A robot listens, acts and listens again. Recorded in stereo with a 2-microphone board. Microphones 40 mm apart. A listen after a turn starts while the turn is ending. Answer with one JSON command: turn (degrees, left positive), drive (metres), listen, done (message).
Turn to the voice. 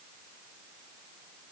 {"listen": true}
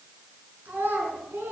{"turn": -65}
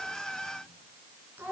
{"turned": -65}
{"turn": -50}
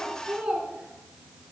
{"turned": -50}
{"turn": -20}
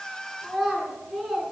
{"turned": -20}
{"done": "Found it: a child speaking, straight ahead."}